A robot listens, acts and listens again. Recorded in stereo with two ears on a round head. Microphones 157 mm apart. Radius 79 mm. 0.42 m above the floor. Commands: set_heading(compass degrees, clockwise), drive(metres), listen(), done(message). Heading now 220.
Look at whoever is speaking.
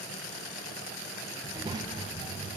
set_heading(245)
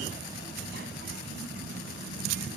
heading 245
set_heading(355)
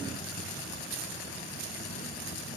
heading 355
listen()
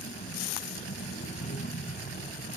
set_heading(315)
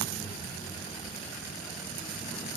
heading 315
listen()
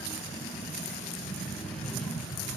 done("Facing the child speaking.")